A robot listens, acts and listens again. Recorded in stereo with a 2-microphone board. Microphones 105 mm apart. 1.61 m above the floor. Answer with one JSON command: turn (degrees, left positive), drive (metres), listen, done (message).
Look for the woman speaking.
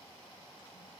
{"listen": true}
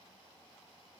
{"listen": true}
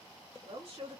{"turn": -70}
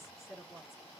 {"done": "Found it: a woman speaking, straight ahead, 2 to 4 m away."}